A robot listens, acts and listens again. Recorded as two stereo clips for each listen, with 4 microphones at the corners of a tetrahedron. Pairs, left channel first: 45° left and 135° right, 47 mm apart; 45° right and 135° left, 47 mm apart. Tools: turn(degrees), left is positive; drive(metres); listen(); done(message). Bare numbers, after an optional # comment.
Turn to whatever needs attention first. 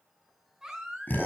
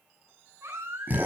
# The baby crying: 145° left.
turn(145)
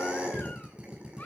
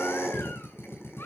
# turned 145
# The baby crying is now 10° right.
turn(-10)
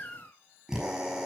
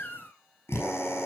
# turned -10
done("Found it: a baby crying, straight ahead.")